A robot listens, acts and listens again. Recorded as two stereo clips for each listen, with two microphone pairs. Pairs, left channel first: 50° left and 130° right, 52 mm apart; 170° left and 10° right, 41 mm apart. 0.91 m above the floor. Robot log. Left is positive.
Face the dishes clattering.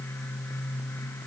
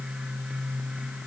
cmd idle
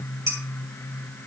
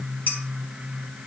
note: The dishes clattering: 150° right.
cmd yaw -150
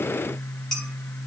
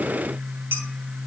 cmd idle
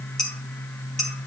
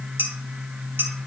note: The dishes clattering is now 30° right.
cmd yaw -30
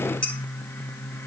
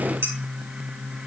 note: The dishes clattering is now 20° right.
cmd yaw -20
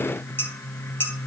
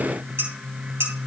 end: Facing the dishes clattering, 2 to 4 m away.